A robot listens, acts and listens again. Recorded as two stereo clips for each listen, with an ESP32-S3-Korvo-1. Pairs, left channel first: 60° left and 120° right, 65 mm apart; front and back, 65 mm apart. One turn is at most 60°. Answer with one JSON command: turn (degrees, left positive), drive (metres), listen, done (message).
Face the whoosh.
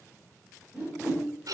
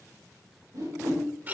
{"turn": 60}
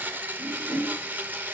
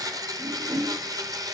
{"turn": 60}
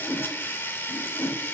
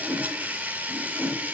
{"turn": 45}
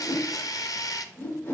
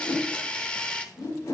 {"done": "Found it: a whoosh, straight ahead."}